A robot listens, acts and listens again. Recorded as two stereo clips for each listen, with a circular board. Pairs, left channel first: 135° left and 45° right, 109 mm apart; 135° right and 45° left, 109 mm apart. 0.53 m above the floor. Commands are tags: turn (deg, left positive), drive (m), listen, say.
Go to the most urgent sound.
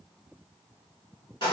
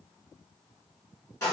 <listen/>
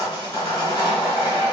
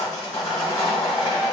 <listen/>
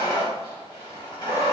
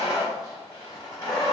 <say>I can't make out anything urgent to turn to.</say>